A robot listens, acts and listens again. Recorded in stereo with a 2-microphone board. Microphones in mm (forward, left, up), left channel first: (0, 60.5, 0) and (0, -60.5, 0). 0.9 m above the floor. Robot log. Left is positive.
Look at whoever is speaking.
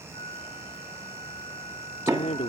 note: The woman speaking: about 70° left or 110° left.
cmd yaw +70
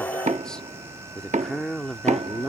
end: Facing the woman speaking.